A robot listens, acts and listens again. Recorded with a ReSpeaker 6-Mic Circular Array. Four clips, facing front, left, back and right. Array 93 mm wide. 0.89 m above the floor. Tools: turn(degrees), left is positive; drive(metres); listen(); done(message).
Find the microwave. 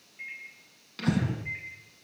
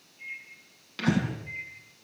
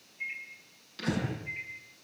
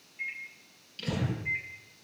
turn(degrees=-55)
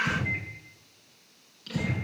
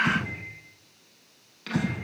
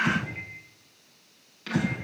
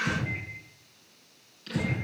listen()
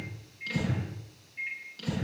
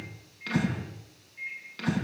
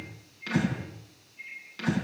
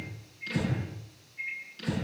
turn(degrees=10)
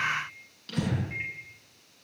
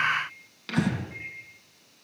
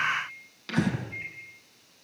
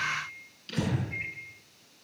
done("Facing the microwave, over 4 m away.")